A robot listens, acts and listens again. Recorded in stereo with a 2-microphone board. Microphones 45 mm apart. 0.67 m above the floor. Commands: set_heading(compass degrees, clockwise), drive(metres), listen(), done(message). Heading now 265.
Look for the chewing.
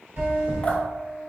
set_heading(325)
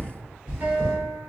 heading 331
set_heading(351)
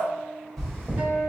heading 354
done("Facing the chewing.")